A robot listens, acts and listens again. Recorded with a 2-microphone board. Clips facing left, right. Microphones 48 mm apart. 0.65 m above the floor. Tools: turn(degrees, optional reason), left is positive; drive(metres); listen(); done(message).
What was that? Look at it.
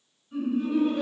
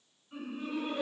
turn(degrees=-25, reason="The laughter: about 25° right or 155° right.")
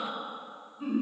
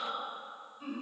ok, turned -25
done("Facing the laughter.")